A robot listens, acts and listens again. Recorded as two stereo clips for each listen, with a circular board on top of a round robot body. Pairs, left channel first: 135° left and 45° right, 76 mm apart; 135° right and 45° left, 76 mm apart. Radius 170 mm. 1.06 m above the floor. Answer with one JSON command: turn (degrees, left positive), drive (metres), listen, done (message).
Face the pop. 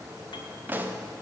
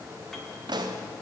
{"turn": 20}
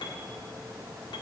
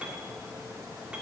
{"done": "Facing where the pop came from. I can't hear it now."}